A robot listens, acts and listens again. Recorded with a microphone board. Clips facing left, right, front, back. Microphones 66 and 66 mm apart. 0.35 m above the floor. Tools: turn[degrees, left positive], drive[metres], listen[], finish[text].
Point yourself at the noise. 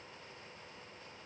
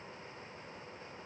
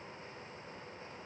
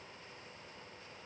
Action: listen[]
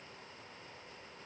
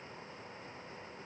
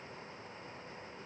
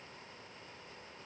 Action: listen[]
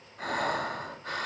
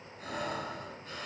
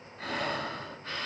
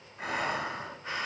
Thought: The breathing: 105° left.
Action: turn[105]
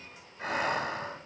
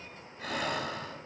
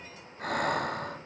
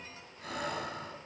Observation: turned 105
Thought: The breathing is now 25° left.
Action: turn[25]
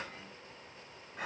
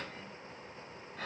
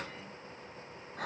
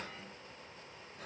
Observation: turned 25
Thought: The breathing is now 15° left.
Action: turn[15]
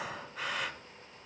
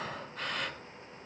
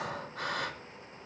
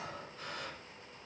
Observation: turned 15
Action: finish[Facing the breathing, 1 to 2 m away.]